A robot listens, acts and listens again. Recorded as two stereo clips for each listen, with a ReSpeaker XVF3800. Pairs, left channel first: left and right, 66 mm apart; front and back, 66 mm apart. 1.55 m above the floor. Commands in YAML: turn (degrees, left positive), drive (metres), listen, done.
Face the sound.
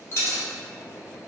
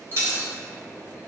turn: 135
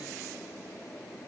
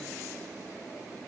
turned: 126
turn: 10
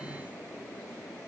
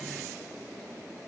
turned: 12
done: "I heard a dropped coin from this way, but can't make it out now."